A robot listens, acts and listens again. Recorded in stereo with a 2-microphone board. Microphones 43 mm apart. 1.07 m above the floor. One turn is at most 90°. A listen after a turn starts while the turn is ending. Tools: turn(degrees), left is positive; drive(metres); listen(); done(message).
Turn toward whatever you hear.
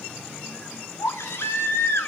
turn(degrees=90)
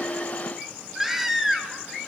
turn(degrees=-10)
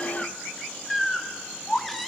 done("Found it: a baby crying, straight ahead.")